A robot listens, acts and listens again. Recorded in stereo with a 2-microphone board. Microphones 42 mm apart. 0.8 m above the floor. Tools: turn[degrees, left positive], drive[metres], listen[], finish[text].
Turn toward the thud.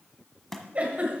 Action: turn[30]
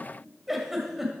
Action: listen[]
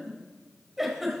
Action: finish[I heard a thud, but can't make it out now. It was about 20° right or 140° left.]